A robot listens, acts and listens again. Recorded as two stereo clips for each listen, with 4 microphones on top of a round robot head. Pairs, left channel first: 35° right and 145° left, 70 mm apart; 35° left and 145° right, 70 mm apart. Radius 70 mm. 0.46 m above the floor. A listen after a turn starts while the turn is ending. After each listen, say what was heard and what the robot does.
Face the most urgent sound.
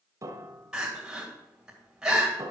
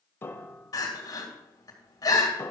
The crying: 65° left. Turn 65° left.
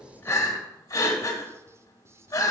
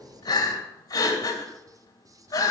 Found it: crying, straight ahead.